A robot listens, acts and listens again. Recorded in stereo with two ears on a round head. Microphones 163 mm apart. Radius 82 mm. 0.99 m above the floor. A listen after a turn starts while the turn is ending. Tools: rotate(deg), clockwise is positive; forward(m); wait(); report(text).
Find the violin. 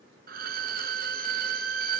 rotate(50)
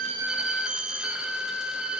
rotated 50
report("Found it: a violin, straight ahead, 1 to 2 m away.")